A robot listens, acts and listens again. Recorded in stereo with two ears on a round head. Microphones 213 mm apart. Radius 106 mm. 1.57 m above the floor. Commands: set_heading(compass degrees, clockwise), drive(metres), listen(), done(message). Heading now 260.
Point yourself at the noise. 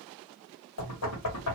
set_heading(170)
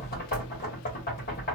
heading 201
set_heading(161)
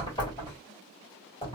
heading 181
set_heading(161)
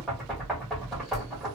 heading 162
done("Facing the knocking, 1 to 2 m away.")